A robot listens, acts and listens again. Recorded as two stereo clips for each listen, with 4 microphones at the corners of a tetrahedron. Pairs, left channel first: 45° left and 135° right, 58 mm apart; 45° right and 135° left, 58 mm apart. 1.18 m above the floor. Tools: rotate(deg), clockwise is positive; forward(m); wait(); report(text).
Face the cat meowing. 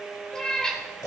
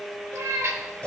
rotate(-120)
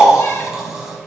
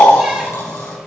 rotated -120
wait()
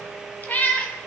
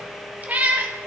rotate(-95)
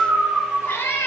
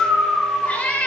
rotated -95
rotate(-20)
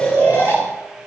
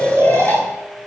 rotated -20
wait()
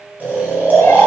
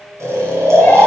wait()
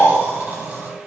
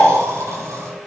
report("Facing where the cat meowing came from. I can't hear it now.")